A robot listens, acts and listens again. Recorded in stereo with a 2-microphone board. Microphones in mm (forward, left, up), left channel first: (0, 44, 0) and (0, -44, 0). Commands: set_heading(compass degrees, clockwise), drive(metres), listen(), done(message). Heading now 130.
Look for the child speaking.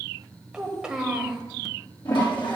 set_heading(160)
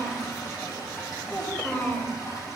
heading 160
set_heading(140)
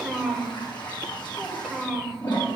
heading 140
done("Found it: a child speaking, straight ahead, 1 to 2 m away.")